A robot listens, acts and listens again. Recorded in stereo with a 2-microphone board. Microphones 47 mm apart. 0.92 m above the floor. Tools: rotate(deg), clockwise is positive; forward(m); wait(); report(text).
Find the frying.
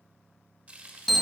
rotate(35)
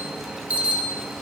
wait()
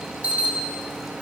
wait()
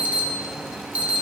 report("I heard frying, but can't make it out now. It was about straight ahead or 110° right.")